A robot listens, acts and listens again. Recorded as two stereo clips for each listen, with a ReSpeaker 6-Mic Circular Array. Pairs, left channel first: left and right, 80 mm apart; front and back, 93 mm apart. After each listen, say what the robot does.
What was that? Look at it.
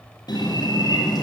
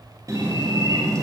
Turn 125° left.
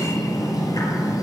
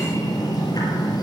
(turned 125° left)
Turn 45° left.
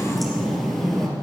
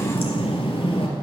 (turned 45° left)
Found it: a bird, straight ahead.